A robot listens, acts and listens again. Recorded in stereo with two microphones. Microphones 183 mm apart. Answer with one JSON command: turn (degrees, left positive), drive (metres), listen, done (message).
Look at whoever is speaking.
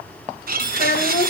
{"turn": 60}
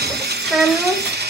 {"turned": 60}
{"done": "Found it: a child speaking, straight ahead."}